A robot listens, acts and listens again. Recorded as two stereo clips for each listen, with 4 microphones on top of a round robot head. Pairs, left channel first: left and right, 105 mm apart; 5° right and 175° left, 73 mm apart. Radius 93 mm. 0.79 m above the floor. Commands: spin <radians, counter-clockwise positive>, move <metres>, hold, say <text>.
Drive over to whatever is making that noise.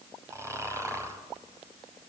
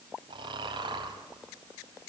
spin -2.71
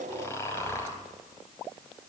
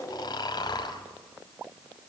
spin 0.35
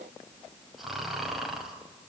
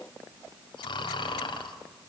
move 1.0
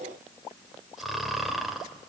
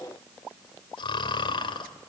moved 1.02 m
move 1.0
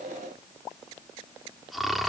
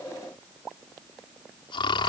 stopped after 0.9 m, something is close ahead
say Arrived at the snoring, straight ahead.